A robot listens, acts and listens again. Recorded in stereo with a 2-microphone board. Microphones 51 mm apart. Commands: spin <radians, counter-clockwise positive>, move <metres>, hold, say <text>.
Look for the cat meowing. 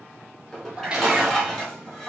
spin -0.35
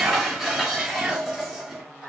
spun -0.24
spin -0.52
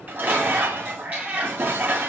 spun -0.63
spin -2.53
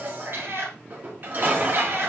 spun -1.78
spin -0.87
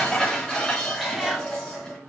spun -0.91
say Found it: a cat meowing, straight ahead, over 4 m away.